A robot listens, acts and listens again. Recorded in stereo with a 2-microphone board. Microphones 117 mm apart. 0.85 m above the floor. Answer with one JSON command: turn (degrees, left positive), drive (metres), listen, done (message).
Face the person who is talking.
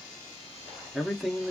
{"turn": -30}
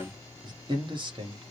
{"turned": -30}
{"turn": -135}
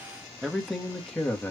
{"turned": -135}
{"turn": 15}
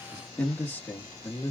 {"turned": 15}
{"turn": 25}
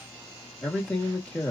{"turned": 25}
{"turn": 10}
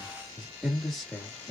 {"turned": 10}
{"done": "Facing the man speaking, 1 to 2 m away."}